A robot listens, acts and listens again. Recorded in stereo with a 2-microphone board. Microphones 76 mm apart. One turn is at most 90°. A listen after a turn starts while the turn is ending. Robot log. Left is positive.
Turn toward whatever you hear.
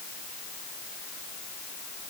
cmd idle
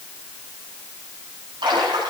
cmd yaw -90
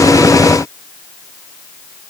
end: I heard a splash from this way, but can't make it out now.